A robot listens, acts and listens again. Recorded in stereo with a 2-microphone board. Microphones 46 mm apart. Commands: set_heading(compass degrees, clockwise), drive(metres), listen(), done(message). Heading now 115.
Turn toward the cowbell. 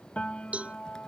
set_heading(145)
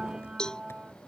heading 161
set_heading(146)
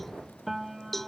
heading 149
done("Facing the cowbell.")